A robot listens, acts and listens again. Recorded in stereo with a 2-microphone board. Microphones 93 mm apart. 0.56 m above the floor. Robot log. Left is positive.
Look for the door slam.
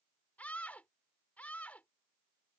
cmd idle
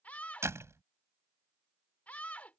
note: The door slam: about 30° right or 150° right.
cmd yaw -30
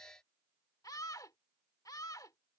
cmd idle
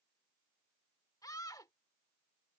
end: I heard a door slam, but can't make it out now. It was about straight ahead or 120° right.